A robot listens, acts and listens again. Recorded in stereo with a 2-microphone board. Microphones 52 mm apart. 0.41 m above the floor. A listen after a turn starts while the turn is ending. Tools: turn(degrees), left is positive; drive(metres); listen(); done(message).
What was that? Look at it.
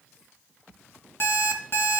turn(degrees=50)
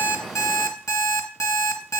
turn(degrees=80)
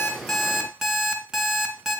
done("Found it: an alarm clock, straight ahead.")